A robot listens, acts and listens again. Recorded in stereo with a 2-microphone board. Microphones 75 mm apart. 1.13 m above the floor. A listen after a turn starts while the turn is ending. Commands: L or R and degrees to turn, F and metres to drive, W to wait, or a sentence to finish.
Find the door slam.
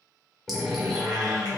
L30
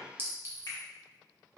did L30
W
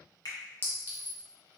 I heard a door slam, but can't make it out now. It was about 25° right or 145° left.